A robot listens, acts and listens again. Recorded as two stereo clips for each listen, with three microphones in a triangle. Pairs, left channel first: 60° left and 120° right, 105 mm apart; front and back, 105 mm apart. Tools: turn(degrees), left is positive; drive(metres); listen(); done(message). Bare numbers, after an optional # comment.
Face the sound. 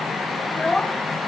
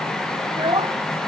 # The child speaking: 140° left.
turn(140)
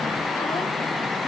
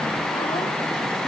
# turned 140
listen()
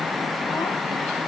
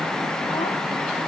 listen()
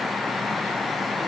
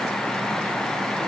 done("I heard a child speaking from this way, but can't make it out now.")